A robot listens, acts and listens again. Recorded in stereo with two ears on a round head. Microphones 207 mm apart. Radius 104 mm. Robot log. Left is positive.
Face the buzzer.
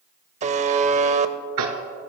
note: The buzzer: about 30° right or 150° right.
cmd yaw -30
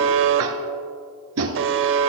note: So it is at 120° right.
cmd yaw -120
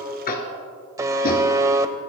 note: The buzzer is now 15° right.
cmd yaw -15
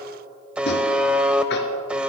end: Found it: a buzzer, straight ahead.